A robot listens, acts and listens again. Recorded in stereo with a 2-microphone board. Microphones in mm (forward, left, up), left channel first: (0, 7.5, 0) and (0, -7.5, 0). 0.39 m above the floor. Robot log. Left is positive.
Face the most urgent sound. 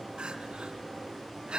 cmd yaw -90
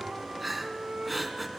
end: Facing the crying.